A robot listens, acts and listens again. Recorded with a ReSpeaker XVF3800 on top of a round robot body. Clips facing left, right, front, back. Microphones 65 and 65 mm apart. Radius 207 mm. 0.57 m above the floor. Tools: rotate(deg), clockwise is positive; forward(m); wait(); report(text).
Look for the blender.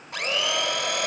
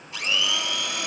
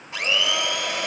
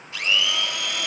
rotate(-65)
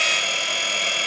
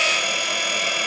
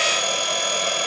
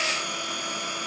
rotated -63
report("Found it: a blender, straight ahead, 2 to 4 m away.")